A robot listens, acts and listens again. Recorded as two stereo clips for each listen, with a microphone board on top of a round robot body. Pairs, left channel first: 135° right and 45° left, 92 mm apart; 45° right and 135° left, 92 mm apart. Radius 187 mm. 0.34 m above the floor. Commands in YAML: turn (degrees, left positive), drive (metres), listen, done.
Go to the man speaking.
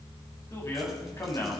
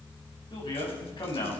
turn: -75
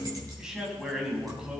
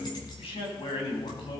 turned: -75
turn: -35
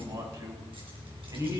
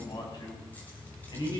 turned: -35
drive: 1.0
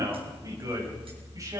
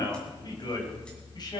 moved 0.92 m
drive: 1.0
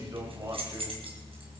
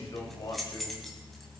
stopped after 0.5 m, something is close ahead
done: "Something is in my way. I am facing the man speaking but have not reached it."